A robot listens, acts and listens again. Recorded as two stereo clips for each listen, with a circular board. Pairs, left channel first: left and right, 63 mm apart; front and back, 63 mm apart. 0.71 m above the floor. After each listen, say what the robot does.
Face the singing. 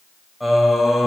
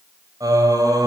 Turn 175° right.
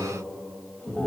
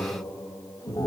Turn 15° left.
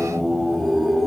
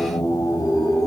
Facing the singing, over 4 m away.